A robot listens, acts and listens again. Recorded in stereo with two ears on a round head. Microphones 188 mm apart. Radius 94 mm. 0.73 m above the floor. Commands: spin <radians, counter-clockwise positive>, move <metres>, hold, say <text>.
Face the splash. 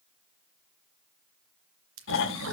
spin -1.13
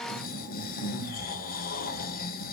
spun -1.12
hold
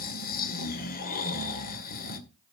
say I heard a splash, but can't make it out now. It was about 5° right or 50° right.